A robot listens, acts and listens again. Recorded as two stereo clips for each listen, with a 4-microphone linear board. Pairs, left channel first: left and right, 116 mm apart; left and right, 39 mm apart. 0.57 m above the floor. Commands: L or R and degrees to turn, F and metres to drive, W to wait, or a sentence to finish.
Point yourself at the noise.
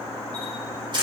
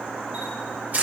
R40
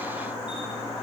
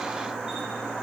W
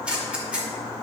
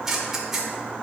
R10
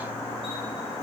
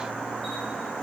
W
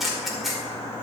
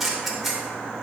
Facing the camera shutter, 2 to 4 m away.